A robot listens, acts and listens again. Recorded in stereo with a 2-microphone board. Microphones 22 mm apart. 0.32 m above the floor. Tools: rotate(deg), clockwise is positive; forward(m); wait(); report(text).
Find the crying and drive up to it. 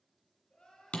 rotate(-55)
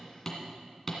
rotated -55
wait()
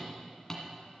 wait()
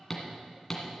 report("I heard crying, but can't make it out now. It was about straight ahead or 70° left. I did not reach it.")